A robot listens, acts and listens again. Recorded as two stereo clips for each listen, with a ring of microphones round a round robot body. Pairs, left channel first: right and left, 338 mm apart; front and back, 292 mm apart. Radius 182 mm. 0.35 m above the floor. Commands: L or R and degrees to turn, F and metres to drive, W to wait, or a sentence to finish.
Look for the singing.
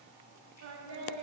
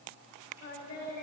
L50
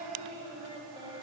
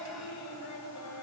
L15
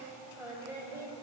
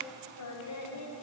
L10
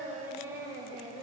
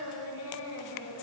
L15
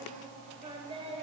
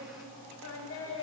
L20
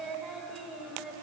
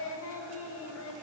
Found it: singing, straight ahead.